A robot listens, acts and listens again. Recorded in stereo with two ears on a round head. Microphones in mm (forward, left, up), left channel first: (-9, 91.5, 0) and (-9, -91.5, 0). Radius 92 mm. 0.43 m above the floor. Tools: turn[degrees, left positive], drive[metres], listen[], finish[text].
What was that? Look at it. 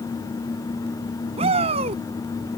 Thought: The shout: about 35° right or 145° right.
Action: turn[-35]
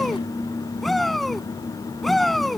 Action: finish[Facing the shout.]